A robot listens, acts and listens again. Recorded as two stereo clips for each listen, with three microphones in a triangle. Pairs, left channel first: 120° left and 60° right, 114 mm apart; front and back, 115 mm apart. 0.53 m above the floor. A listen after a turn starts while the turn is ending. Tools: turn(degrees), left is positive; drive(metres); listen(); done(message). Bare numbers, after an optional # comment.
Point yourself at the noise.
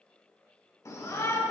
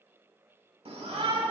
# The shout: 175° left.
turn(175)
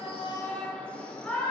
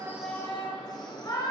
# The shout is now 45° left.
turn(45)
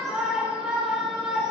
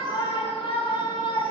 # The shout is now 20° left.
turn(20)
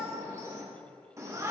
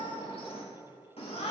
done("Found it: a shout, straight ahead.")